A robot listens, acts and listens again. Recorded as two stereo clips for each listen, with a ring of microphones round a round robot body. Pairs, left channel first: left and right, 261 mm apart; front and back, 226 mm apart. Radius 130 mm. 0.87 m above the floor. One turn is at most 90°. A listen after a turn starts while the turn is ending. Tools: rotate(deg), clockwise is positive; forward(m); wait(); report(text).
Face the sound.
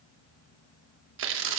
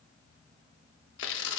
rotate(45)
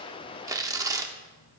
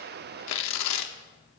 rotate(10)
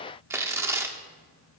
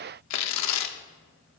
rotate(10)
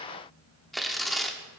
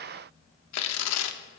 report("Found it: tearing paper, straight ahead, under 1 m away.")